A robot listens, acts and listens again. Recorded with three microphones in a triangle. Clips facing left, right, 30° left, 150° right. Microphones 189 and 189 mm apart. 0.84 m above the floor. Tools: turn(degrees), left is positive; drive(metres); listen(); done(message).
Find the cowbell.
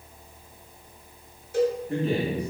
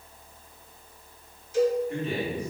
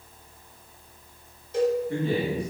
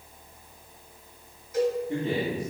turn(degrees=85)
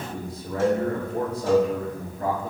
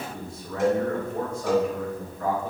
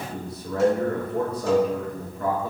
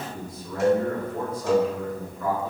turn(degrees=-20)
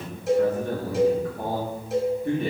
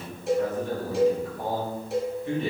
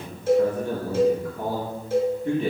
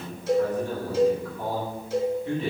done("Found it: a cowbell, straight ahead.")